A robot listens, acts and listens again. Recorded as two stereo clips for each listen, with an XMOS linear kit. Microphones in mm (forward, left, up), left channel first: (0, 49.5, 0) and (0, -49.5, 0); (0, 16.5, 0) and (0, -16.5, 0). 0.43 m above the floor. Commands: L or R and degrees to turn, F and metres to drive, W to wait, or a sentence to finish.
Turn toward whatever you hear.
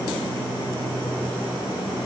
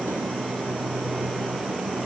W
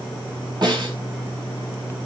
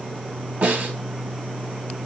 R50
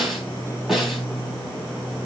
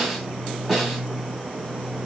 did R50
Facing the snare drum, 2 to 4 m away.